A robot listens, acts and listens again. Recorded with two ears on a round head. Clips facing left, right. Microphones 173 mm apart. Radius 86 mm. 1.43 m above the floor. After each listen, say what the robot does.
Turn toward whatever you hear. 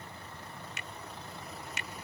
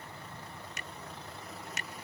Turn 35° right.
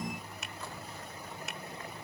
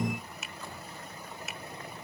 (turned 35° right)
Found it: a finger snap, straight ahead.